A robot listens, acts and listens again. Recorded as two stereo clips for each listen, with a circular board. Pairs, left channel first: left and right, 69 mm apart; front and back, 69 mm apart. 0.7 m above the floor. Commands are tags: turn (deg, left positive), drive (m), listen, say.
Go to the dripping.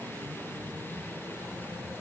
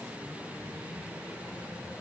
<listen/>
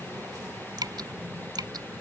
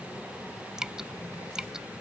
<turn deg="-100"/>
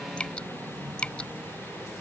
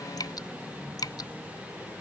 <turn deg="15"/>
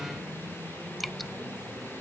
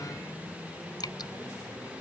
<drive m="1.0"/>
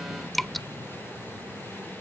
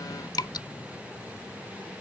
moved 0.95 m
<drive m="1.0"/>
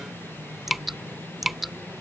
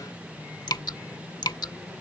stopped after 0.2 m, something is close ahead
<say>Arrived at the dripping, straight ahead.</say>